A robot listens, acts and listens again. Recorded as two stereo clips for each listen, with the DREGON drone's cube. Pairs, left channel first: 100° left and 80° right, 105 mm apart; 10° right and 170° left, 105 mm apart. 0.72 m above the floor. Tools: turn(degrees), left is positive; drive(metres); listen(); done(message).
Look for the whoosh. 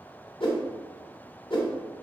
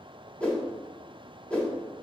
turn(degrees=65)
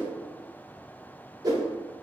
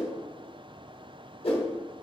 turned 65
turn(degrees=-30)
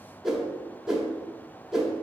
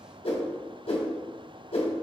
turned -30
done("Found it: a whoosh, straight ahead, 1 to 2 m away.")